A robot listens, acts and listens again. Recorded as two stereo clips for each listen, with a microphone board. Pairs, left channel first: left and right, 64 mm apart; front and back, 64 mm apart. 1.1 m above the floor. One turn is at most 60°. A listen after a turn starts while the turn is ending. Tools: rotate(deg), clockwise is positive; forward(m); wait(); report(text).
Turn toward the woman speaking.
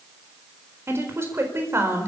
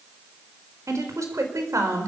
rotate(60)
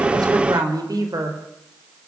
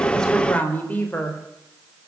rotate(60)
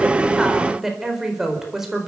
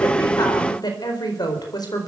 report("Found it: a woman speaking, straight ahead.")